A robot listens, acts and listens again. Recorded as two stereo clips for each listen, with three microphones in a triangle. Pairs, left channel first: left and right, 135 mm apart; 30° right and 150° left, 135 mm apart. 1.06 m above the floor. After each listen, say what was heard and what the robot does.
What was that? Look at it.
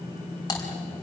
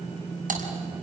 The typing on a keyboard: 150° left. Turn 150° left.
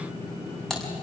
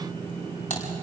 Found it: typing on a keyboard, straight ahead, over 4 m away.